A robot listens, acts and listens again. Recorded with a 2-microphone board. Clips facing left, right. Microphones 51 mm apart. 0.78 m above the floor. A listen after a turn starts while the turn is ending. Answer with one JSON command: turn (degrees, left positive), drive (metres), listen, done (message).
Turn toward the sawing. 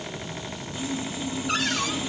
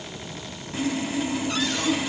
{"turn": -70}
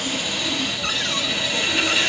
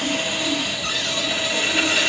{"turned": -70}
{"turn": -10}
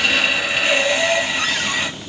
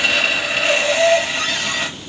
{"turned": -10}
{"done": "Facing the sawing."}